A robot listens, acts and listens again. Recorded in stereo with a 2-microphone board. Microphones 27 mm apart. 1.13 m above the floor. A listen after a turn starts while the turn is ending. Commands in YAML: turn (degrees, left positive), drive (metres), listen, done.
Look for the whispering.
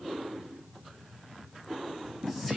listen: true
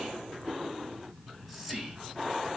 turn: 30
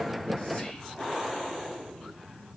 listen: true
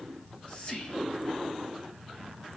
turn: 150
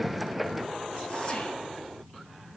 listen: true
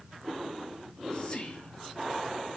turn: 25
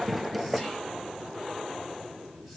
listen: true
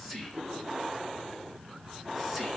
done: "Found it: whispering, straight ahead."